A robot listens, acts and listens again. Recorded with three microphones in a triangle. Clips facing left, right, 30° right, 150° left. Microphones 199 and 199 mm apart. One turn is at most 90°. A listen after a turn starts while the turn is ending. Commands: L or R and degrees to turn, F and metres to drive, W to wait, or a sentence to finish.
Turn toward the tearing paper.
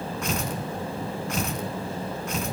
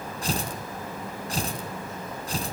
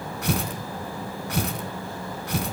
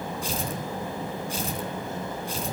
R35
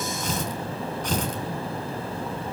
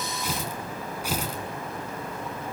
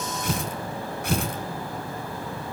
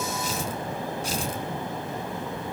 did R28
R10
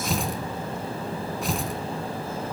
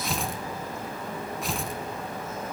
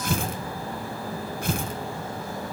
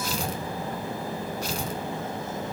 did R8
Found it: tearing paper, straight ahead, 2 to 4 m away.